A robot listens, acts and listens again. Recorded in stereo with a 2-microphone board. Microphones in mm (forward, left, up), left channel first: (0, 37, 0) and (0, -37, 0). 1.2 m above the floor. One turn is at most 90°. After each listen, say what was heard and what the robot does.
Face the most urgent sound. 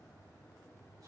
Keep listening.
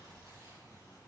Keep listening.
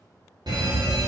The fire alarm: about 70° right or 110° right. Turn 70° right.
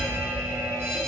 So it is at 35° right. Turn 35° right.
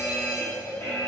The fire alarm is now 30° left. Turn 30° left.
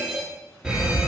The fire alarm is now 10° right. Turn 10° right.
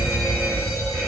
Facing the fire alarm.